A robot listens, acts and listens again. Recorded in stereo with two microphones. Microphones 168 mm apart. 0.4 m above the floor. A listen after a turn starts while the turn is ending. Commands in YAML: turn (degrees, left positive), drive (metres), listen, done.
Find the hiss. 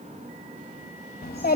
listen: true
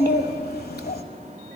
listen: true
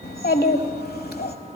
done: "I can't make out a hiss to turn to."